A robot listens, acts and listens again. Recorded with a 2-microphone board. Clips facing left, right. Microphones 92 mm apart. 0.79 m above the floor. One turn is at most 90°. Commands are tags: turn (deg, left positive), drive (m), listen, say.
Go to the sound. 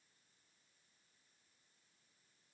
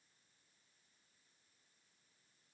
<listen/>
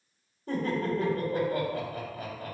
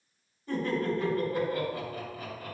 <turn deg="60"/>
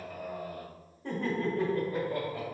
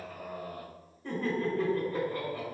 <turn deg="25"/>
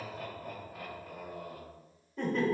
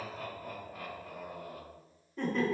<drive m="1.0"/>
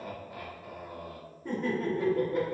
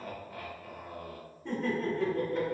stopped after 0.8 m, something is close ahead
<turn deg="10"/>
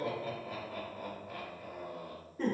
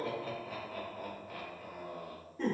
<say>Arrived at the laughter, straight ahead.</say>